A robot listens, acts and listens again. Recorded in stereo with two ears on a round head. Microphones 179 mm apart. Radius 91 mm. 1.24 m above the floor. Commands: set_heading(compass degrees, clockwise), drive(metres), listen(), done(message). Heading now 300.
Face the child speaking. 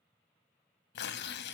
listen()
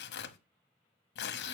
listen()
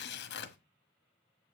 done("I can't make out a child speaking to turn to.")